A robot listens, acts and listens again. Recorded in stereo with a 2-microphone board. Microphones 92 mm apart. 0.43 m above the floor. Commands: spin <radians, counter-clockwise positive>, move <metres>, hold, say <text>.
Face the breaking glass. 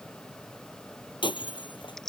spin 1.05
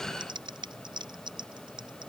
hold
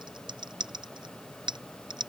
say I heard breaking glass, but can't make it out now. It was about straight ahead or 60° left.